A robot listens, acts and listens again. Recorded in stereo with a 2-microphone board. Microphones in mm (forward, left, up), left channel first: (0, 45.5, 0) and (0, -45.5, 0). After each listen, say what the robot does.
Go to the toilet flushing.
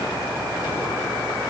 Keep listening.
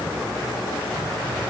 Keep listening.
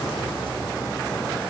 I can't make out a toilet flushing to turn to.